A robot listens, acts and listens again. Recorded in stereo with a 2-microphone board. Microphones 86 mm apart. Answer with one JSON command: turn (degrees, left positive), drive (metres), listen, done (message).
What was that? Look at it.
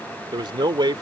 {"turn": -65}
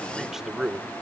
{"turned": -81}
{"turn": -10}
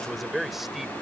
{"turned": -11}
{"done": "Found it: a man speaking, straight ahead."}